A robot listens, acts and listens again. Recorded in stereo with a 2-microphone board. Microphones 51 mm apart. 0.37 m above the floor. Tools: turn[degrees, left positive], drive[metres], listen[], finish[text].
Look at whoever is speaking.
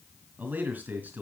Thought: The man speaking: about 40° right or 140° right.
Action: turn[-40]
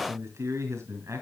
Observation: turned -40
Thought: So it is at 100° right.
Action: turn[-100]
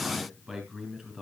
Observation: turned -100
Thought: The man speaking is now 10° right.
Action: turn[-10]
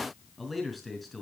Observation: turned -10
Action: finish[Found it: a man speaking, straight ahead, 2 to 4 m away.]